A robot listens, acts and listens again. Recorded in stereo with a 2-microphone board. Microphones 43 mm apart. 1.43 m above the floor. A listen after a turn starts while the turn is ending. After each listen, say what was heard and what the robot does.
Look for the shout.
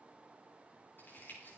Keep listening.
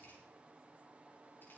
Keep listening.
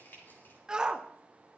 The shout: about 15° right or 165° right. Turn 15° right.
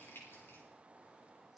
Keep listening.
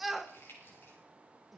Found it: a shout, straight ahead.